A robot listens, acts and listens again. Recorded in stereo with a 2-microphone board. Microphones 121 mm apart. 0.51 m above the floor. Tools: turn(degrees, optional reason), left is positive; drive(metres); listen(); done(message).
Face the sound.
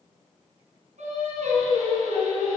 turn(degrees=-90)
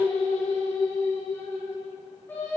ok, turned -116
turn(degrees=15, reason="So it is at 15° left.")
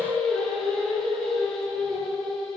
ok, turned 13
done("Facing the singing.")